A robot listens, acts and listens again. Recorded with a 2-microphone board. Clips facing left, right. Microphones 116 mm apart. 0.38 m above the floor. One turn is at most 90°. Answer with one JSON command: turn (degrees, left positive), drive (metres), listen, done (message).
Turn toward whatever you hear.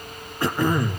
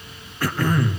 {"turn": 25}
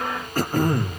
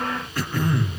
{"turn": 90}
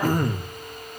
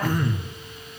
{"turn": 50}
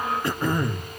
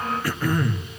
{"turn": 25}
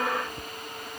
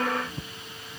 {"listen": true}
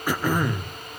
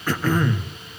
{"turn": 15}
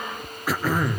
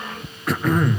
{"done": "Facing the throat clearing, 1 to 2 m away."}